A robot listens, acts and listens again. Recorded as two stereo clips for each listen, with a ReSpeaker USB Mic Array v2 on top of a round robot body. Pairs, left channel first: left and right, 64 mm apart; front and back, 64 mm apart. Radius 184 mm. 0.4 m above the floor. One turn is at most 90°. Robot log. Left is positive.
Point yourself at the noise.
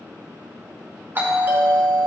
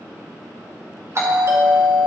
note: The doorbell: 145° right.
cmd yaw -90
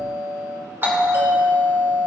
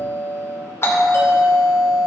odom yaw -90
note: The doorbell is now 40° right.
cmd yaw -40
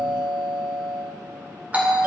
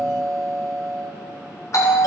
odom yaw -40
note: The doorbell is now 25° right.
cmd yaw -25
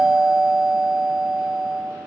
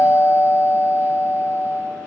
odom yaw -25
end: Found it: a doorbell, straight ahead.